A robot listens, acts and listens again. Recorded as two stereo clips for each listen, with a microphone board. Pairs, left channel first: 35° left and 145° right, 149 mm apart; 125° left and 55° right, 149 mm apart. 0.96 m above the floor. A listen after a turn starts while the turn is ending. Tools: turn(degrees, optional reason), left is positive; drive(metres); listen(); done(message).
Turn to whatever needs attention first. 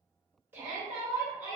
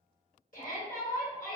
turn(degrees=140, reason="The shout: 140° left.")
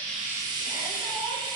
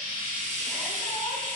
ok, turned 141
listen()
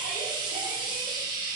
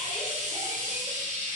listen()
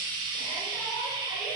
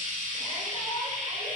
done("Facing where the shout came from. I can't hear it now.")